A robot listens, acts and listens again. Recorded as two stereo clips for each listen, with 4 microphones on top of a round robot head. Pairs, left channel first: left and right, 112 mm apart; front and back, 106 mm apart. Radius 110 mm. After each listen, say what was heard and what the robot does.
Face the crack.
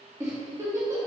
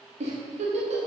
Keep listening.
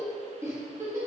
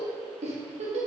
Keep listening.
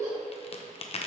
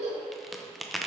The crack: 90° left. Turn 90° left.
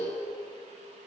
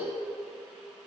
I heard a crack from this way, but can't make it out now.